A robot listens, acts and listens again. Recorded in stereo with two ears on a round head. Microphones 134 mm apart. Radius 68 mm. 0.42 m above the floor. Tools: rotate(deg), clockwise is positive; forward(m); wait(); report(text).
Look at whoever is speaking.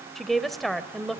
rotate(-30)
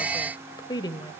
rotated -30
rotate(-145)
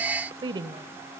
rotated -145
rotate(35)
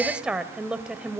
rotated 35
report("Found it: a woman speaking, straight ahead.")